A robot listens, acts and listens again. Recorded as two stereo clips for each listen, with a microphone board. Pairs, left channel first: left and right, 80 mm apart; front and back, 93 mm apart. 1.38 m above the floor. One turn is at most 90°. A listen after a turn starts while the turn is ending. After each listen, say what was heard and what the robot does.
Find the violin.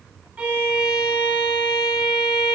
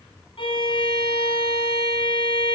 The violin: 15° right. Turn 15° right.
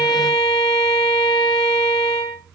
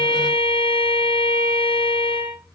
Facing the violin, over 4 m away.